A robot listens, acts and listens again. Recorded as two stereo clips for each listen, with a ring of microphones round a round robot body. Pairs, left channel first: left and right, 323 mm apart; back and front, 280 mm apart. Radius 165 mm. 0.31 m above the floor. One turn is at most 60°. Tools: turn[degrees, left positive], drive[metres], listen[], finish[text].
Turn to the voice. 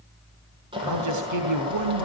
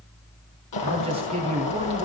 Thought: The man speaking: 70° right.
Action: turn[-60]
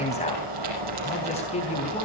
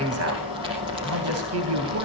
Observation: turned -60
Thought: The man speaking is now 20° left.
Action: turn[20]
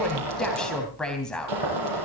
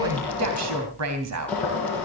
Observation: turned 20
Action: finish[Found it: a man speaking, straight ahead.]